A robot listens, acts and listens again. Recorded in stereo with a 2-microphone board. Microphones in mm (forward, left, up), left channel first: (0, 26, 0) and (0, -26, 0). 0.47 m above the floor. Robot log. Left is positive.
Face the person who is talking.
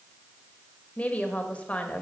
note: The woman speaking: about 25° left or 155° left.
cmd yaw +25
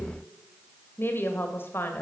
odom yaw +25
note: So it is at 125° left.
cmd yaw +125
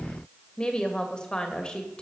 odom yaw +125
note: The woman speaking is now 20° left.
cmd yaw +20
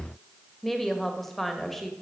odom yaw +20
end: Found it: a woman speaking, straight ahead.